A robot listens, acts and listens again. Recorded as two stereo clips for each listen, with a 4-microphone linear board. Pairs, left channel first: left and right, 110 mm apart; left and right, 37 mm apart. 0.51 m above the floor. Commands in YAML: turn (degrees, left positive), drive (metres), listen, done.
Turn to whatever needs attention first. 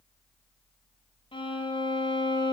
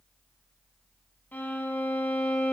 listen: true
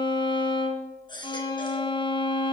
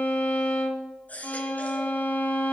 turn: 45
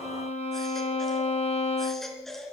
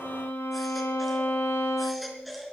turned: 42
done: "Facing the baby crying."